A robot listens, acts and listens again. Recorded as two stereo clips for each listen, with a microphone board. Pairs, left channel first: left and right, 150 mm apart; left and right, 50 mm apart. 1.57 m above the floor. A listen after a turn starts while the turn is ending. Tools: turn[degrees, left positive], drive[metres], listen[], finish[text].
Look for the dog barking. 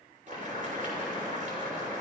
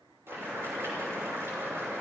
Action: listen[]
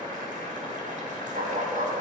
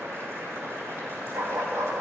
Thought: The dog barking: about 70° right or 110° right.
Action: turn[-70]
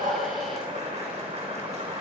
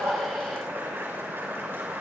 Action: listen[]
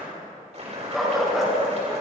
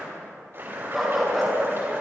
Action: finish[Facing the dog barking.]